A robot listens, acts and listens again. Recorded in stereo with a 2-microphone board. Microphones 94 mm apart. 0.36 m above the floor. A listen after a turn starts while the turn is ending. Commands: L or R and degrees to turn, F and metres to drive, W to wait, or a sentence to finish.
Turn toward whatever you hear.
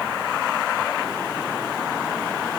W
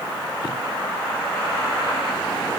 W
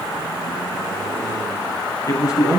L40
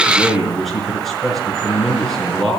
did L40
Found it: a man speaking, straight ahead, over 4 m away.